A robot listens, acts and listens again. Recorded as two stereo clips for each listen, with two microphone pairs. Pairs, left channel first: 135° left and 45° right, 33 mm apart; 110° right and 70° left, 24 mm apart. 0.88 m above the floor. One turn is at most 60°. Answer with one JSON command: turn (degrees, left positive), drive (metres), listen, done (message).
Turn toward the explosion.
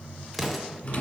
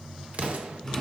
{"turn": 45}
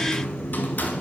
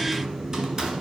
{"done": "Facing where the explosion came from. I can't hear it now."}